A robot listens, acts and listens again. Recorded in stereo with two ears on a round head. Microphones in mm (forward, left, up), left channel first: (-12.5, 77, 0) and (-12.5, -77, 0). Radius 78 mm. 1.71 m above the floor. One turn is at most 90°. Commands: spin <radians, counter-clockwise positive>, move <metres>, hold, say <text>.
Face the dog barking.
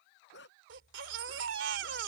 spin 1.31
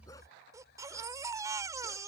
hold
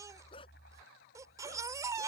spin 0.52
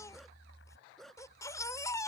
say Found it: a dog barking, straight ahead.